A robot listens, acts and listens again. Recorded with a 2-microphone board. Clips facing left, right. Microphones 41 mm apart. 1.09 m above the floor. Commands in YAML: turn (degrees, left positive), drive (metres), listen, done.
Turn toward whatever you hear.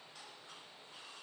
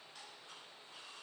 listen: true
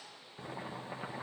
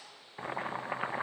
turn: -55
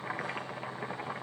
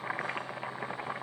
turn: -15
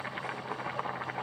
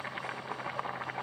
done: "Facing the boiling, 1 to 2 m away."